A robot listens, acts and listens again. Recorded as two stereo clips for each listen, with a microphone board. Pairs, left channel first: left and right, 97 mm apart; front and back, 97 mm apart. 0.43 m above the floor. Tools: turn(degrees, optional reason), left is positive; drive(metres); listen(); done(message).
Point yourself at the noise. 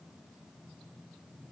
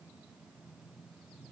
listen()
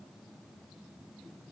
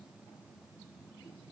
listen()
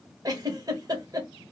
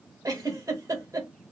turn(degrees=-130, reason="The giggle: 130° right.")
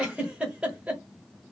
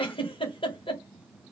turn(degrees=-15, reason="The giggle is now 15° right.")
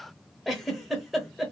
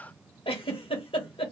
done("Facing the giggle, under 1 m away.")